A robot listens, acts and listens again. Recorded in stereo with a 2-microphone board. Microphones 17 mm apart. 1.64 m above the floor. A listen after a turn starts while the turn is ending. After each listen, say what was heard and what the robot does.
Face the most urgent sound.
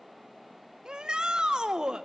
The shout: about 65° right or 115° right. Turn 65° right.
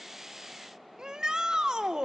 So it is at 45° right. Turn 45° right.
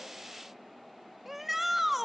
The shout is now 10° right. Turn 10° right.
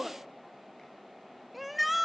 Found it: a shout, straight ahead.